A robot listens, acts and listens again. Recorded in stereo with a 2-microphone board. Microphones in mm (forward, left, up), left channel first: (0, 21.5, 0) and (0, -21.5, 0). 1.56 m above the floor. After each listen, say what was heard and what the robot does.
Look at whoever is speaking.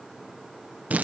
Keep listening.
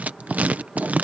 Keep listening.
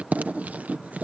I can't make out anyone speaking to turn to.